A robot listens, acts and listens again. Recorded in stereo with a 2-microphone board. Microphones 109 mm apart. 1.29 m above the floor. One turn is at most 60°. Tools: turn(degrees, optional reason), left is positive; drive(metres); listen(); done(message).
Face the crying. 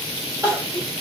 turn(degrees=-30, reason="The crying: about 30° right or 150° right.")
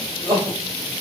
turn(degrees=-60, reason="So it is at 120° right.")
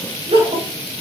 turn(degrees=-60, reason="The crying is now 85° right.")
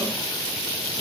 turn(degrees=-25, reason="Nothing new. It was at 25° right.")
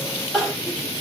done("Found it: crying, straight ahead, 2 to 4 m away.")